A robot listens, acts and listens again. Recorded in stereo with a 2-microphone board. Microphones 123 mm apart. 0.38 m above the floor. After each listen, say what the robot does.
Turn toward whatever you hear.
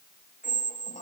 Turn 90° left.
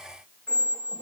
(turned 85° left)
Turn 10° left.
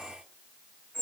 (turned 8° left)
Found it: a squeak, straight ahead, under 1 m away.